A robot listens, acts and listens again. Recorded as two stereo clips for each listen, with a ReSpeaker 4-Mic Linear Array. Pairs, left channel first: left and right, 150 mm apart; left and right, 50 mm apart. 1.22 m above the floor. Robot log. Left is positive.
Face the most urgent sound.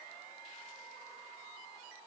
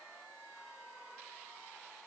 cmd idle
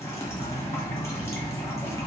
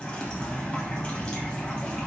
cmd idle
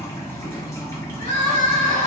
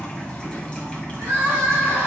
note: The crying: about 60° right or 120° right.
cmd yaw -60
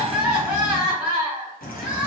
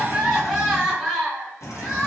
end: Facing the crying.